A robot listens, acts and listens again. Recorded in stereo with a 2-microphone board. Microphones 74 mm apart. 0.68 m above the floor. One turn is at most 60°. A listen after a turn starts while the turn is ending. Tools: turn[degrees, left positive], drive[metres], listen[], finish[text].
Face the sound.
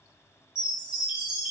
Action: turn[-30]
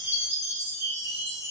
Thought: So it is at 140° right.
Action: turn[-60]
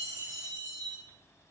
Thought: The chime is now 80° right.
Action: turn[-60]
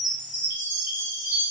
Thought: The chime is now 25° right.
Action: turn[-25]
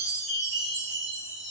Thought: The chime is now 10° right.
Action: turn[-10]
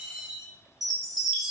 Action: finish[Facing the chime.]